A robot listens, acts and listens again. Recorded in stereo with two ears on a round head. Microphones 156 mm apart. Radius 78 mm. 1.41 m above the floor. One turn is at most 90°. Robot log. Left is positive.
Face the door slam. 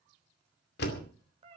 note: The door slam: about 65° left or 115° left.
cmd yaw +65
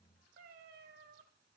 cmd idle
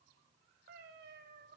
end: I heard a door slam, but can't make it out now. It was about straight ahead or 50° left.